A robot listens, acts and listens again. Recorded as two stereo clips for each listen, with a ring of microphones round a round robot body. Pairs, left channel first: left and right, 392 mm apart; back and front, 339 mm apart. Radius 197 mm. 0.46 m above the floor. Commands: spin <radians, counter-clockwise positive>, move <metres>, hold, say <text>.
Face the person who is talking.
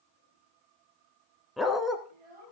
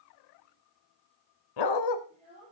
spin -1.31
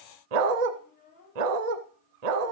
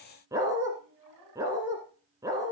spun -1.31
spin 0.35
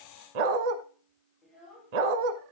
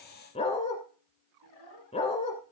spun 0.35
say Found it: a child speaking, straight ahead, over 4 m away.